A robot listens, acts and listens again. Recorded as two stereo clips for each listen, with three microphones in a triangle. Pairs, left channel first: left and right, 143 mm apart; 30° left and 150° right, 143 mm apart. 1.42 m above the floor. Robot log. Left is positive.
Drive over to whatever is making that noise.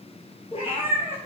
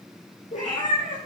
note: The cat meowing: 50° left.
cmd yaw +50
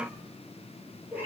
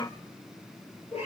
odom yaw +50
note: The cat meowing is now 10° right.
cmd yaw -10
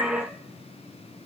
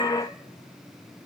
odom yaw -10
cmd idle
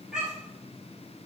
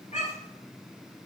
cmd fwd 1.0
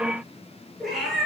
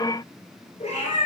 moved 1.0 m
cmd fwd 1.0
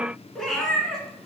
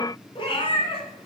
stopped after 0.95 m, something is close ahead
end: I am next to the cat meowing.